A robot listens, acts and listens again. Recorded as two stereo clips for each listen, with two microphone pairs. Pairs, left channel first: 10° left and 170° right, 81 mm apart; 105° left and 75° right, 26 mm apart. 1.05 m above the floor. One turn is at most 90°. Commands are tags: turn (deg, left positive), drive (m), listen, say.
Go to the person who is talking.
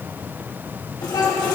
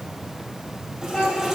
<turn deg="35"/>
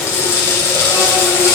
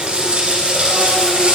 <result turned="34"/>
<listen/>
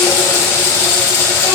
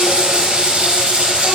<listen/>
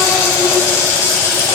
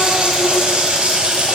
<say>Facing where the child speaking came from. I can't hear it now. I did not reach it.</say>